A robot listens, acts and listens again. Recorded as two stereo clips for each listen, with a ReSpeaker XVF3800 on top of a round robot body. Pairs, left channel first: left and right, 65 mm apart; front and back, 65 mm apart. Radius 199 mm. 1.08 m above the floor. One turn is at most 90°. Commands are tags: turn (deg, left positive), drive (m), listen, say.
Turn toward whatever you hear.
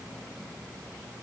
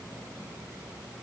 <listen/>
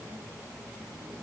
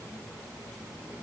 <listen/>
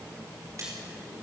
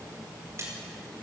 <turn deg="-90"/>
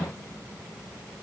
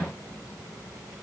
<turn deg="-45"/>
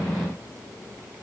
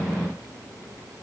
<say>Facing where the splash came from. I can't hear it now.</say>